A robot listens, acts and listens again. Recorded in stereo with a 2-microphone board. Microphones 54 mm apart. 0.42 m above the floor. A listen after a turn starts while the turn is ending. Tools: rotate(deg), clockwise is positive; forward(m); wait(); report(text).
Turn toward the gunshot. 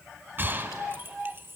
rotate(40)
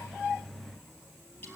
wait()
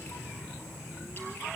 report("I heard a gunshot, but can't make it out now. It was about straight ahead or 100° right.")